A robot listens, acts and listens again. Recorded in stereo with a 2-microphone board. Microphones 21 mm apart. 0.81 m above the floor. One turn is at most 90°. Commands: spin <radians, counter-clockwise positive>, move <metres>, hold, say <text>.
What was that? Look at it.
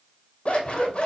spin 1.05
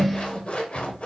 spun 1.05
spin 1.13
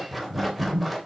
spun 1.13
say Found it: scissors, straight ahead, 2 to 4 m away.